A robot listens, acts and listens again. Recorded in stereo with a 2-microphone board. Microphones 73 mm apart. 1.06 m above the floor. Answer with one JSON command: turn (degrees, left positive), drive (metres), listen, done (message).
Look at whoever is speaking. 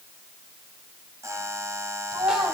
{"turn": -90}
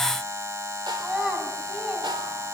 {"done": "Facing the child speaking."}